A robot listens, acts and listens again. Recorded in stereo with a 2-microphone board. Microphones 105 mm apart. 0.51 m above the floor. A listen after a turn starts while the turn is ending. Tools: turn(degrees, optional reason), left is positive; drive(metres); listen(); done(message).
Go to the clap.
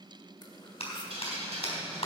turn(degrees=70, reason="The clap: about 70° left or 110° left.")
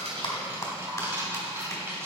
turn(degrees=30, reason="So it is at 30° left.")
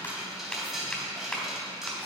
turn(degrees=10, reason="The clap is now 10° left.")
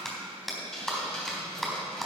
drive(metres=1.0)
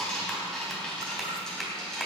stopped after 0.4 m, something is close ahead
done("Something is in my way. I am facing the clap but have not reached it.")